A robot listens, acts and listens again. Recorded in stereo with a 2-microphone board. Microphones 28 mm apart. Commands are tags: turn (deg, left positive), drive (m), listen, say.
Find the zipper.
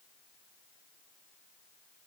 <listen/>
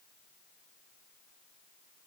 <listen/>
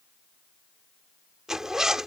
<turn deg="-20"/>
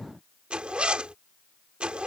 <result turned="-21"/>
<turn deg="-140"/>
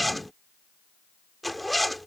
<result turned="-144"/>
<say>Found it: a zipper, straight ahead.</say>